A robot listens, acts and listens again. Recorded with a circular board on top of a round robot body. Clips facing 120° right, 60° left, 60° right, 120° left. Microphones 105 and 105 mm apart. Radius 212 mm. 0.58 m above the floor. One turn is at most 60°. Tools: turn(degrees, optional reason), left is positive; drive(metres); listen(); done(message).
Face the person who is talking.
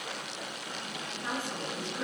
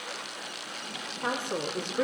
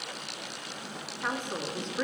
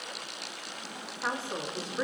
turn(degrees=40, reason="The woman speaking: 40° left.")
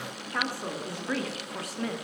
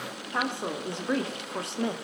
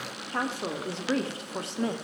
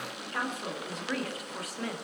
done("Facing the woman speaking, 2 to 4 m away.")